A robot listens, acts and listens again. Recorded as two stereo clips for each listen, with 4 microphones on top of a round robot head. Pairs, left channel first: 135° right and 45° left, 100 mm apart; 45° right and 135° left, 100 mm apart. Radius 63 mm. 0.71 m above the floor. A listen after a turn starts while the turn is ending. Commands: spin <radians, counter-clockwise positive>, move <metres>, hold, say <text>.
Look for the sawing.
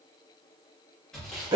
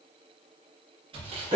spin 2.44
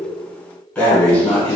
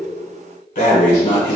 hold
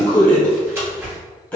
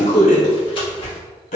spin -0.26
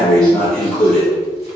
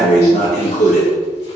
hold
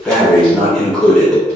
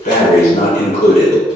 hold
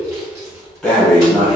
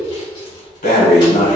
spin -0.17
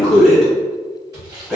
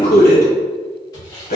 say Facing the sawing, 1 to 2 m away.